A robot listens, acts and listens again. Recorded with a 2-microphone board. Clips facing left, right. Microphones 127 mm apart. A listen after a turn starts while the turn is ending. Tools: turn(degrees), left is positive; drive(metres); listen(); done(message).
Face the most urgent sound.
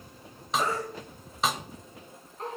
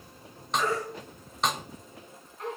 turn(degrees=35)
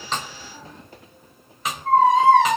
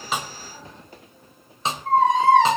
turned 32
done("Found it: a baby crying, straight ahead, over 4 m away.")